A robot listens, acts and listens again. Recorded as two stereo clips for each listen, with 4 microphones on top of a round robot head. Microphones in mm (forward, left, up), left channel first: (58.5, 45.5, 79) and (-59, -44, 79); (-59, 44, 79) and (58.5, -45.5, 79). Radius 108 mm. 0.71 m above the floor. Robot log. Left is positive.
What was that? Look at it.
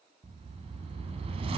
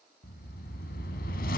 note: The whoosh: 165° left.
cmd yaw +165
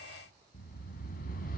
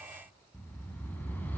note: The whoosh is now 65° left.
cmd yaw +65
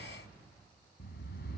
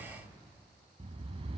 note: The whoosh is now 15° left.
cmd yaw +15
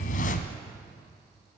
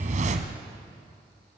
end: Facing the whoosh, 1 to 2 m away.